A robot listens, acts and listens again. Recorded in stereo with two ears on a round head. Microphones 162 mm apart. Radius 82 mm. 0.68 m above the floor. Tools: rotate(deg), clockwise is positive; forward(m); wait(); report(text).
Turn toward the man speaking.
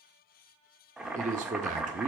rotate(45)
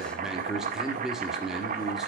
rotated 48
report("Found it: a man speaking, straight ahead, 1 to 2 m away.")